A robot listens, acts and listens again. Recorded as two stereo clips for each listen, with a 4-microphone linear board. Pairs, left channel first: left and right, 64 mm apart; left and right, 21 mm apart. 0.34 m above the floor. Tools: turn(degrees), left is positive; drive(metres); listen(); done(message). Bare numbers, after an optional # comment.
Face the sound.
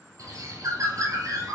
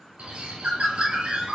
# The bird: about 60° right or 120° right.
turn(-60)
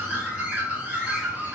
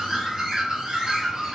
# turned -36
# So it is at 25° right.
turn(-25)
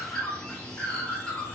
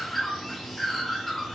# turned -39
# The bird is now 15° left.
turn(15)
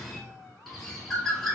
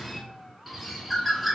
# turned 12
done("Found it: a bird, straight ahead, 1 to 2 m away.")